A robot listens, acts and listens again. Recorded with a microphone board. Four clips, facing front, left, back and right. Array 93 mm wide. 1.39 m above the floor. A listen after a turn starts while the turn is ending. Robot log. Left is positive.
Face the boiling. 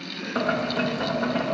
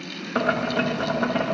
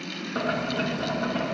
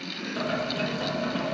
note: The boiling: 75° left.
cmd yaw +75
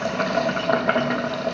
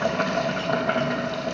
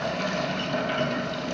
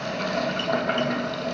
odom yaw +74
end: Facing the boiling, 1 to 2 m away.